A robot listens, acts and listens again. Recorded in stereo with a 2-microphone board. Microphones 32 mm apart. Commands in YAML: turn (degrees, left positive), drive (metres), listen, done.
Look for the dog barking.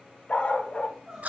turn: 45
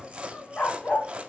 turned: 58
turn: 80
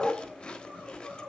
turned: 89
turn: 25
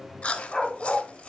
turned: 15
turn: 30
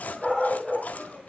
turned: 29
done: "Found it: a dog barking, straight ahead."